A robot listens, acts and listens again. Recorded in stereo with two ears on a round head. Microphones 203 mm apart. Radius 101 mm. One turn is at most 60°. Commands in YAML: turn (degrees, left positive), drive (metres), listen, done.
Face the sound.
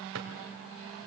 turn: -60
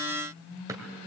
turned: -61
turn: -15
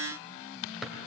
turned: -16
done: "Facing the drawer, 1 to 2 m away."